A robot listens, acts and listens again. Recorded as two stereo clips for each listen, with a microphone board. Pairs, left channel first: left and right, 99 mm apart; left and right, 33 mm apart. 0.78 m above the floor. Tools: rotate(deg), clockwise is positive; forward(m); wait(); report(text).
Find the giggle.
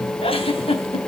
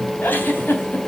rotate(-90)
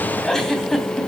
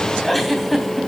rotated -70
report("Found it: a giggle, straight ahead, 2 to 4 m away.")